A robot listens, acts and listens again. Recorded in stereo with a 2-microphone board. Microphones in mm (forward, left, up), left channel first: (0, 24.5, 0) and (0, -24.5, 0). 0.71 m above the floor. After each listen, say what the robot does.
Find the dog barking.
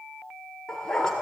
Turn 30° left.
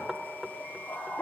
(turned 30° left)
Turn 150° left.
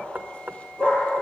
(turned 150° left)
Turn 25° left.
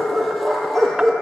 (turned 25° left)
Found it: a dog barking, straight ahead, over 4 m away.